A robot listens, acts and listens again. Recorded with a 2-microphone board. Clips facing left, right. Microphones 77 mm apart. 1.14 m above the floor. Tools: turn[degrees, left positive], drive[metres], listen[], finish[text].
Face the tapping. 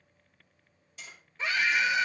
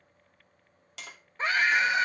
Action: turn[-90]
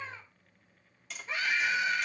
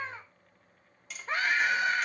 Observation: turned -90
Action: finish[Found it: tapping, straight ahead, 2 to 4 m away.]